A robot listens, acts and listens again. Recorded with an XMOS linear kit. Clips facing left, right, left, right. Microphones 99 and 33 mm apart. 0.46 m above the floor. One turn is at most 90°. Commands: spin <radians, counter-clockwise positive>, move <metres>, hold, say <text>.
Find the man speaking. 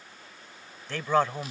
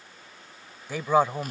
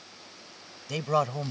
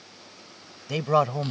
spin -0.52
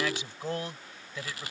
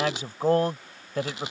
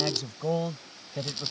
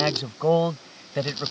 spin -1.57
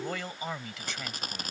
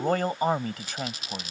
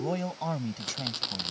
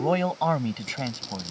spin -0.70
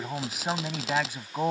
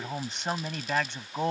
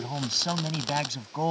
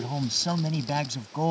say Found it: a man speaking, straight ahead.